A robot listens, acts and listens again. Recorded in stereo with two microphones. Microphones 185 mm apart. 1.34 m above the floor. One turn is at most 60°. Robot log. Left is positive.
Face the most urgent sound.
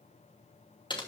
cmd idle
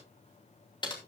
cmd idle
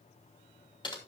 end: I can't make out anything urgent to turn to.